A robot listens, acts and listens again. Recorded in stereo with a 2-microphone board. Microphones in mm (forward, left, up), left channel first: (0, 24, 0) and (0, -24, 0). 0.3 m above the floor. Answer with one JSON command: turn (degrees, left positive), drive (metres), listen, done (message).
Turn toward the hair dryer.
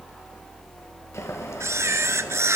{"listen": true}
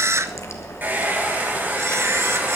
{"turn": -40}
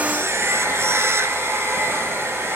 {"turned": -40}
{"turn": -100}
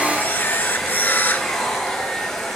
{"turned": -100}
{"done": "Facing the hair dryer."}